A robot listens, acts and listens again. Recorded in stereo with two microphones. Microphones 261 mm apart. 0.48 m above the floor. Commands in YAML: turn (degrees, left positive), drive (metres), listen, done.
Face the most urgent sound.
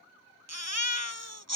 turn: -90
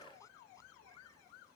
listen: true
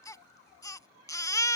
turn: 10
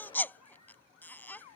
done: "Facing the baby crying."